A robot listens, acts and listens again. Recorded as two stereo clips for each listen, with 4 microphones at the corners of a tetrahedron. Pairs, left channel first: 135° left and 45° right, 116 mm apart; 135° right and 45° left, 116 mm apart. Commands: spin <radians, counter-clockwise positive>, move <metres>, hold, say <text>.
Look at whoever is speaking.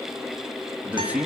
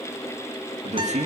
spin 0.61
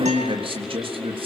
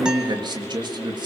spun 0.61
say Facing the man speaking, 2 to 4 m away.